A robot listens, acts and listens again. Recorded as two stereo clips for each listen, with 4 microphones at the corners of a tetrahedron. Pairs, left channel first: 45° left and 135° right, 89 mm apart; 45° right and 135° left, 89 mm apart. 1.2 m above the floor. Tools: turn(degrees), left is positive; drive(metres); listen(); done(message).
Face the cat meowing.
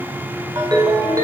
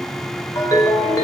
listen()
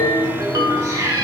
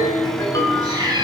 turn(degrees=170)
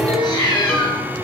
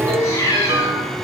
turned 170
turn(degrees=10)
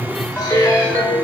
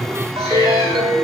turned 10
listen()
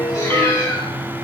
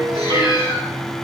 listen()
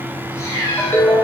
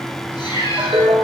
turn(degrees=-10)
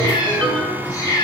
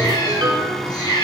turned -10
done("Found it: a cat meowing, straight ahead.")